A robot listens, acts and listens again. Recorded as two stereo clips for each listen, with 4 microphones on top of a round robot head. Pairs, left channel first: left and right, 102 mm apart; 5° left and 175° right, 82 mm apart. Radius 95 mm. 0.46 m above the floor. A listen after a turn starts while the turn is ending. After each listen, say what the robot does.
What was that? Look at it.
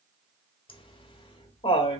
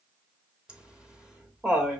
Turn 105° left.
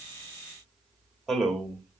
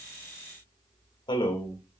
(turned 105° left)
Found it: laughter, straight ahead, 1 to 2 m away.